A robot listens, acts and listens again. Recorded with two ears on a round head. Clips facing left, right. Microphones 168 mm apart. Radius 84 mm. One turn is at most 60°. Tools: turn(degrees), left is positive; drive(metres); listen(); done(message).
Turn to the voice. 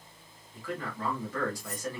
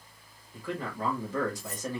turn(degrees=-20)
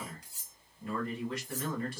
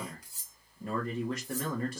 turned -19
turn(degrees=-60)
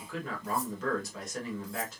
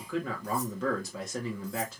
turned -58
turn(degrees=-60)
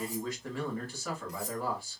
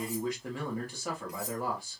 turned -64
turn(degrees=-15)
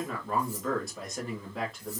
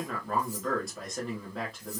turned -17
done("Found it: a man speaking, straight ahead.")